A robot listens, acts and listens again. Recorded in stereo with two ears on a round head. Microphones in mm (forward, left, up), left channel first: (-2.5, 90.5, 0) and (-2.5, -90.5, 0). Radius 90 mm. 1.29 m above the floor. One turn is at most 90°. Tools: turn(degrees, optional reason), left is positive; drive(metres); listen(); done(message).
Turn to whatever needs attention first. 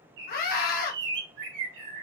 turn(degrees=45, reason="The scream: about 45° left or 135° left.")
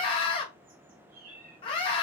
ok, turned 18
turn(degrees=25, reason="So it is at 25° left.")
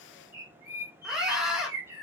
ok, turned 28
done("Facing the scream.")